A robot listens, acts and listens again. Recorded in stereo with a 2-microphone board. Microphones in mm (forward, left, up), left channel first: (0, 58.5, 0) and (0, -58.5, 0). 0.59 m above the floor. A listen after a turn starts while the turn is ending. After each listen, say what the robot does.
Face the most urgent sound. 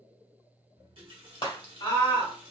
Turn 45° left.
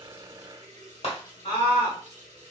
Turn 85° left.
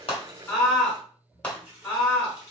Turn 10° left.
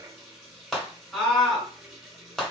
Found it: a scream, straight ahead.